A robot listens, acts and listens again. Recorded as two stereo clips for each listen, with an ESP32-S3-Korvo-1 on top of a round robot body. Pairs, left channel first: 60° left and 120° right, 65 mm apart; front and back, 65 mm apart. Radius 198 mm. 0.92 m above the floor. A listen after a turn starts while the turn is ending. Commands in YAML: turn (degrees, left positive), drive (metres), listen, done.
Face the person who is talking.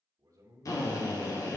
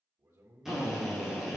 turn: -150
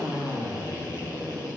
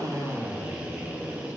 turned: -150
listen: true
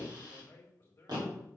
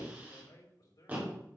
done: "Facing the man speaking, 2 to 4 m away."